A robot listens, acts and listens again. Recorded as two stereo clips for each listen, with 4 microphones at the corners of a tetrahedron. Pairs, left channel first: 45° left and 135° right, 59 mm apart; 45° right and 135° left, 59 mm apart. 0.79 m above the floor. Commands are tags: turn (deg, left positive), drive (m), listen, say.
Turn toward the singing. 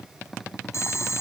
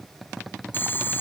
<listen/>
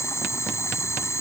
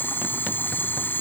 <listen/>
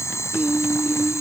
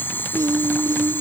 <turn deg="160"/>
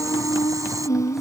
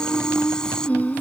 <turn deg="15"/>
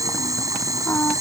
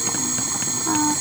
<say>Facing the singing.</say>